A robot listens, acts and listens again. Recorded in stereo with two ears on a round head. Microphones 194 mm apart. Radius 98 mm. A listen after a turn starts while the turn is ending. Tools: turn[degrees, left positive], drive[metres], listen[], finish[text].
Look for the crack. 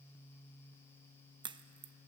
Thought: The crack: about 20° right or 160° right.
Action: turn[-20]
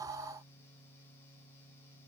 Action: listen[]
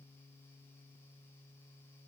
Action: finish[I heard a crack, but can't make it out now. It was about straight ahead or 140° right.]